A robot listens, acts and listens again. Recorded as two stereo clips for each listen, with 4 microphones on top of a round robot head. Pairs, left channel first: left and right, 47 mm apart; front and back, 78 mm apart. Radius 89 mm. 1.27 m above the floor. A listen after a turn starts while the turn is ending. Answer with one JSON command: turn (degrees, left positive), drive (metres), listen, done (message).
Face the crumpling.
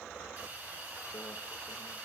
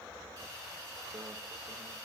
{"listen": true}
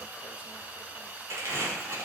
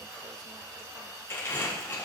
{"turn": -65}
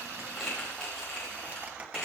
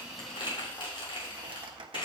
{"turn": 10}
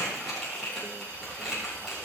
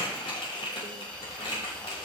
{"done": "Facing the crumpling."}